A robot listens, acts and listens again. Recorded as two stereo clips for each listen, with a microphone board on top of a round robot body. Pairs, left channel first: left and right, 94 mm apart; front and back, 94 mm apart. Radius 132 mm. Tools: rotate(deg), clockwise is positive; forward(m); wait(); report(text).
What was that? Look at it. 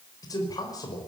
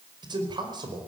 rotate(-140)
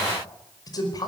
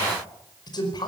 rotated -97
rotate(-45)
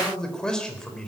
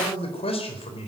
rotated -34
rotate(-10)
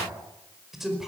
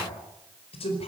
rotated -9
report("Facing the man speaking, over 4 m away.")